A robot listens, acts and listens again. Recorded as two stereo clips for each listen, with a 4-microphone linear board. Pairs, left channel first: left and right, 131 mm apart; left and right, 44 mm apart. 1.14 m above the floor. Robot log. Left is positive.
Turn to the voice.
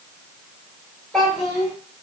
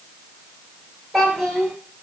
cmd yaw +30
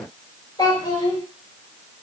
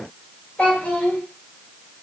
note: So it is at 145° left.
cmd yaw +145
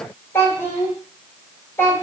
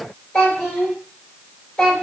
note: The child speaking is now 15° left.
cmd yaw +15
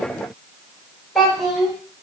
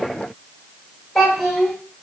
end: Facing the child speaking, 2 to 4 m away.